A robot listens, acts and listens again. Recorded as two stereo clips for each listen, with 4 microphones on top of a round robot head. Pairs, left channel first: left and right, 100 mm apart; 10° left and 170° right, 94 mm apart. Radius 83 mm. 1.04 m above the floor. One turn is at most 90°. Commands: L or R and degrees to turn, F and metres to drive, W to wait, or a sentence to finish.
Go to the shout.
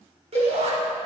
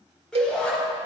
R75
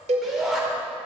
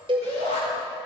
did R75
F1.0
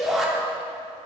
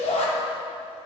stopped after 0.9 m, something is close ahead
Blocked. The shout is further on, straight ahead.